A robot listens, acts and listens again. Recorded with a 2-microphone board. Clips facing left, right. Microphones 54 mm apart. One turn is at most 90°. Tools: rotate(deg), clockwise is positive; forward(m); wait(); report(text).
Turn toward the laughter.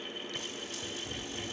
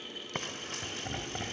rotate(55)
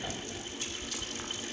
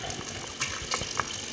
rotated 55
rotate(10)
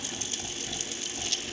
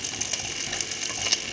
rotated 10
wait()
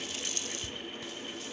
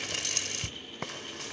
wait()
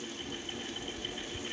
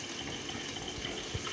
rotate(25)
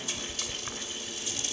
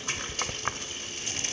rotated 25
wait()
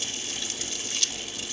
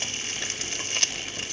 wait()
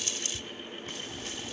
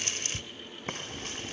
report("I heard laughter from this way, but can't make it out now.")